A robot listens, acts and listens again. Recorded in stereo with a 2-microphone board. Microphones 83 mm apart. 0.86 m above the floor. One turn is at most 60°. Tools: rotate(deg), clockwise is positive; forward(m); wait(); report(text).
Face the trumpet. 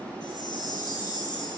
wait()
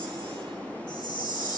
wait()
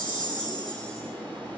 report("I can't make out a trumpet to turn to.")